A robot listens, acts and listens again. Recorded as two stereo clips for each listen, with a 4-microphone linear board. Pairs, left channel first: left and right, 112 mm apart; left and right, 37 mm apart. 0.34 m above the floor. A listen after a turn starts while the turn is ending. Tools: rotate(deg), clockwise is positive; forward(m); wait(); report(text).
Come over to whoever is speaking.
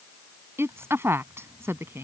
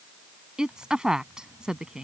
rotate(20)
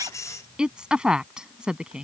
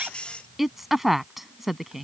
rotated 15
rotate(10)
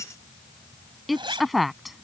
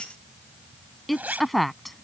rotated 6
forward(1.0)
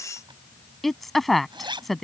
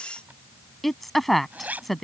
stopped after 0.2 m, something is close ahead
report("Something is in my way. I am facing the woman speaking but have not reached it.")